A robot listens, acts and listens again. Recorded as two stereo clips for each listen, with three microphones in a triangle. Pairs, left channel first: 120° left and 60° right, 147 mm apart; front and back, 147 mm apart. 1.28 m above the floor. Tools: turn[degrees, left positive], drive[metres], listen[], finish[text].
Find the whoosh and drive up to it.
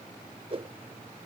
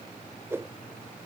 Thought: The whoosh: 105° right.
Action: turn[-105]
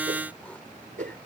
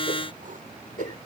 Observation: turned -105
Thought: The whoosh is now 30° right.
Action: turn[-30]
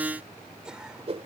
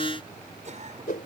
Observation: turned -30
Thought: The whoosh is now 15° right.
Action: turn[-15]
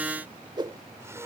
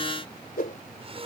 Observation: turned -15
Action: drive[1.0]
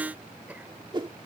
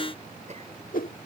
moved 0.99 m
Action: drive[1.0]
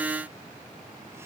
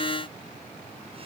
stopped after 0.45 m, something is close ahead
Action: listen[]
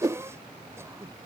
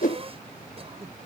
Action: finish[I am next to the whoosh.]